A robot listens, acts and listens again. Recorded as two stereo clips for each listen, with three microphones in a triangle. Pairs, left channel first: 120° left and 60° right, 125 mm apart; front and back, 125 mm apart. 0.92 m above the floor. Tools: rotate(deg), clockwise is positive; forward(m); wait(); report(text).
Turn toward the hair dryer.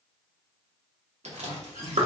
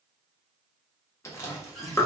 wait()
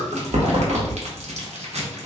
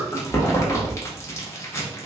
wait()
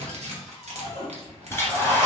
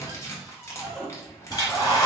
rotate(-50)
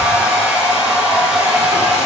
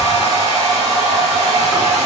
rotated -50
rotate(-25)
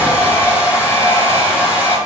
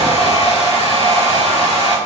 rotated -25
rotate(-15)
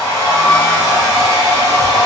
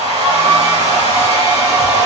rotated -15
report("Found it: a hair dryer, straight ahead, 2 to 4 m away.")